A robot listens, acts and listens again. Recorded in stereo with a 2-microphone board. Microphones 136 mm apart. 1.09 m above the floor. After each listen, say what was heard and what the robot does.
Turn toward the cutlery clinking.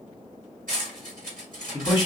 Turn 90° right.
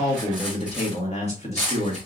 Facing the cutlery clinking, 2 to 4 m away.